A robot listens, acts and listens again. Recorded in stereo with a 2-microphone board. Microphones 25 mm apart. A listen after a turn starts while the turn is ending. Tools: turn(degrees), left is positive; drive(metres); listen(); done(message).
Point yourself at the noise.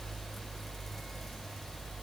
listen()
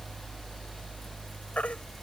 turn(degrees=70)
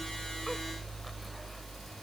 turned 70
listen()
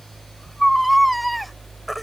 done("Facing the baby crying.")